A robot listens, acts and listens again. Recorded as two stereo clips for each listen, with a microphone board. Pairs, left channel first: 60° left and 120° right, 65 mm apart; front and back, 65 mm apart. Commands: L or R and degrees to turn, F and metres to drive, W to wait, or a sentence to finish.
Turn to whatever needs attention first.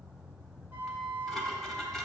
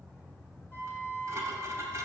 W
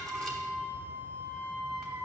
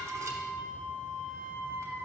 W
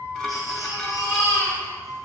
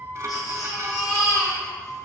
L25
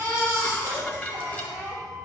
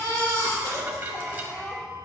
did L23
Found it: a baby crying, straight ahead, 2 to 4 m away.